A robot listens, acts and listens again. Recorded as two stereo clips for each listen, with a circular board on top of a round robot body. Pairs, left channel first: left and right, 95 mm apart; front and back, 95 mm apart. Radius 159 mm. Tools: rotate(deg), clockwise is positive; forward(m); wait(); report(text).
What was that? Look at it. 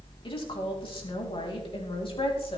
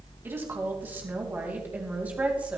rotate(-105)
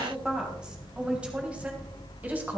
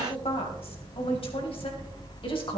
rotate(20)
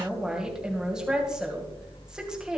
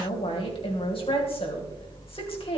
rotate(10)
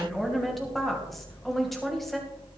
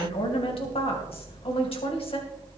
report("Found it: a woman speaking, straight ahead, 2 to 4 m away.")